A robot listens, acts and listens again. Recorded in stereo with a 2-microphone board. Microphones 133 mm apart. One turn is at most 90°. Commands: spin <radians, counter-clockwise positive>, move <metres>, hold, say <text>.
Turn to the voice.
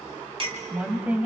spin -0.52
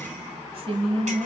spin -1.57
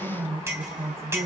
spin -0.35
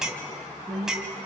say Facing the woman speaking, 2 to 4 m away.